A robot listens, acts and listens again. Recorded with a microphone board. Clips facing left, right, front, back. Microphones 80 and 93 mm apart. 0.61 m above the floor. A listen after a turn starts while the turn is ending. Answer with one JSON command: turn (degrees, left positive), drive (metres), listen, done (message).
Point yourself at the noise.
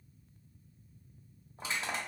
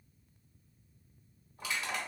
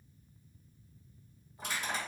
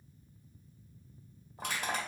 {"turn": 150}
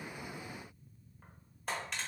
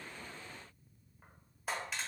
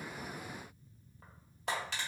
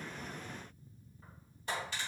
{"done": "Facing the crushing."}